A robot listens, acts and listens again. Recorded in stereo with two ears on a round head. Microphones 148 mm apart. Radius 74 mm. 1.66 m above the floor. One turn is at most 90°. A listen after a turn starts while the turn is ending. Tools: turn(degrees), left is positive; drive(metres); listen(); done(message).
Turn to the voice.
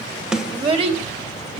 turn(degrees=-35)
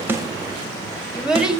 done("Found it: a child speaking, straight ahead, 1 to 2 m away.")